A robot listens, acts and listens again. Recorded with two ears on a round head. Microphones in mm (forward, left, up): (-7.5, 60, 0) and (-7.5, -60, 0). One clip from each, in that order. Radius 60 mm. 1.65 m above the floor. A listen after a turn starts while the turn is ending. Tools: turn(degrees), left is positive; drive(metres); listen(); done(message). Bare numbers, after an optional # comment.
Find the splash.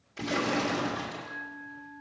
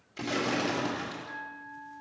turn(-30)
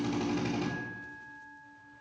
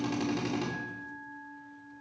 listen()
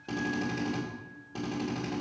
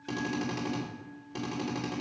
done("I heard a splash, but can't make it out now. It was about 15° left or 135° right.")